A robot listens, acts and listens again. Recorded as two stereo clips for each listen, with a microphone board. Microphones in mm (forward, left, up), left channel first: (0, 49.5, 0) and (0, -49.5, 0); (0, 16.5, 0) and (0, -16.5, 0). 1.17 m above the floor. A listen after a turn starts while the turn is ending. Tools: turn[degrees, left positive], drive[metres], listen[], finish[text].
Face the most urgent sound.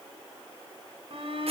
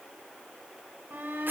Thought: The shout: about 65° right or 115° right.
Action: turn[-65]
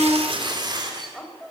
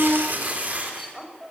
Action: finish[Facing the shout.]